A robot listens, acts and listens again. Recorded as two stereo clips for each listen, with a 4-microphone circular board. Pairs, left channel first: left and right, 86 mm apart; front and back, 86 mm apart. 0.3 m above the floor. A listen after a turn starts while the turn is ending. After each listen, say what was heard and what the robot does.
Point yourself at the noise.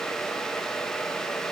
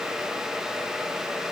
Keep listening.
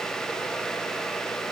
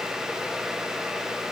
Keep listening.
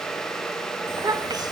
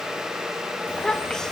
The child speaking: 75° right. Turn 75° right.
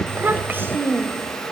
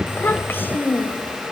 The child speaking is now 65° right. Turn 65° right.
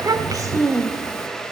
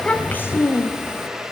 The child speaking is now 50° right. Turn 50° right.
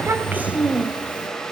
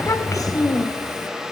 The child speaking is now 20° right. Turn 20° right.
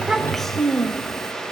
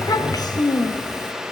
Facing the child speaking, 1 to 2 m away.